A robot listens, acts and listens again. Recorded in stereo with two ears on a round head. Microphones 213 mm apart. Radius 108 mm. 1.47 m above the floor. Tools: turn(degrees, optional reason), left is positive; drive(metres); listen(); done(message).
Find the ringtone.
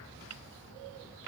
listen()
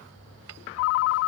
turn(degrees=60, reason="The ringtone: about 60° left or 120° left.")
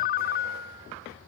turn(degrees=40, reason="So it is at 40° left.")
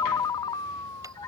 turn(degrees=15, reason="The ringtone is now 15° left.")
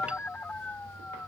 done("Facing the ringtone.")